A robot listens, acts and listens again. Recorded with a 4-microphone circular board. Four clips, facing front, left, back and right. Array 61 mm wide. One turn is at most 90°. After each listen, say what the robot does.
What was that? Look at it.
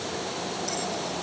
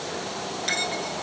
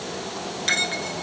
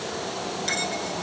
Turn 90° left.
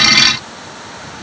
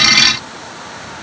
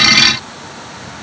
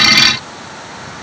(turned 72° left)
Turn 90° left.
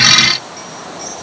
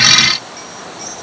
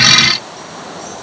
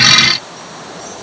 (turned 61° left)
Turn 45° left.
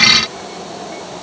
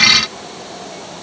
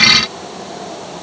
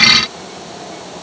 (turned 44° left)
Facing where the bell came from. I can't hear it now.